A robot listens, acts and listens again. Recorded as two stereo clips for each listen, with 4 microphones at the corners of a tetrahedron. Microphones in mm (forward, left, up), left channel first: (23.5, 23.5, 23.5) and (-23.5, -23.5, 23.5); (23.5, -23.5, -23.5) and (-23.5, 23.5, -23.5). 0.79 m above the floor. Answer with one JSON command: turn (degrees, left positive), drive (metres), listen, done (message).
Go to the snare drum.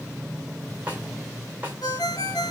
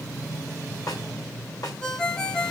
{"turn": -65}
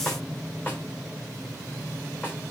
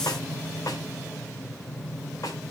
{"turn": -10}
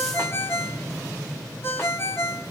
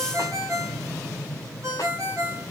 {"listen": true}
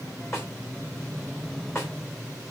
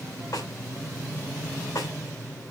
{"drive": 1.0}
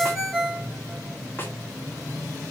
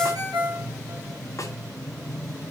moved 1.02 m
{"listen": true}
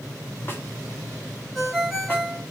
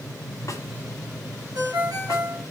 {"listen": true}
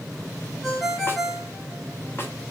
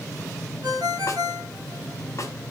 {"done": "I heard a snare drum from this way, but can't make it out now. I did not reach it."}